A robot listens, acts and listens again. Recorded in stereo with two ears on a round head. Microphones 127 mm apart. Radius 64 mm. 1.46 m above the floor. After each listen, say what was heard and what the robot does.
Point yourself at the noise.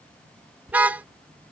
Turn 30° right.
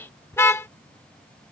So it is at 20° left. Turn 20° left.
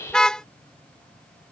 Facing the car horn.